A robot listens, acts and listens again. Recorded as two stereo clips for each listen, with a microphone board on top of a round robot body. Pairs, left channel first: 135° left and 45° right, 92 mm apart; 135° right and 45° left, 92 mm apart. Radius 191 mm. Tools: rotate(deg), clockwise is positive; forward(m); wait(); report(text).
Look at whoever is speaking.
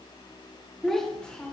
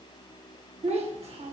rotate(-55)
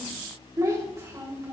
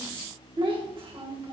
rotate(-20)
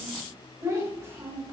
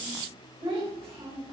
rotate(-15)
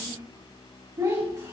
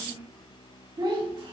rotate(-10)
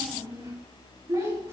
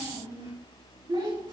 report("Facing the child speaking.")